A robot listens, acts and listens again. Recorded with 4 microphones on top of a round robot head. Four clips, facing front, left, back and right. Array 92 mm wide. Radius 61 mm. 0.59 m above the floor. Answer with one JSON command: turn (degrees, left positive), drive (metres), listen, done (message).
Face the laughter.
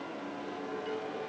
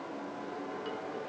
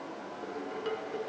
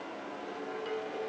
{"listen": true}
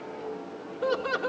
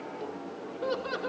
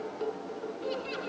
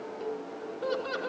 {"turn": 10}
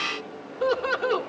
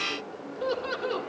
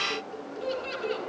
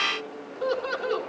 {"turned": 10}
{"done": "Facing the laughter, 2 to 4 m away."}